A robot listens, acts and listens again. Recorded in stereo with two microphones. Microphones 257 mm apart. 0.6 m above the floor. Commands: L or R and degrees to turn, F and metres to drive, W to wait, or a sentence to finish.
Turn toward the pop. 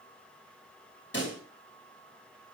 L50
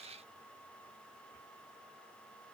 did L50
W
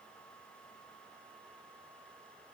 I heard a pop, but can't make it out now. It was about straight ahead or 80° left.